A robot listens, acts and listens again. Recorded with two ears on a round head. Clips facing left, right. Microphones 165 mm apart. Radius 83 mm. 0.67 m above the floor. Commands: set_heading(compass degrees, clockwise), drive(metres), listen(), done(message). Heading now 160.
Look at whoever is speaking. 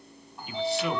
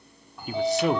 set_heading(195)
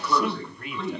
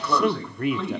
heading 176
set_heading(306)
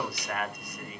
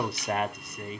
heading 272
set_heading(297)
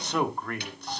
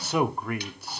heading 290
set_heading(300)
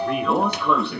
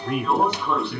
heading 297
done("Facing the man speaking, 1 to 2 m away.")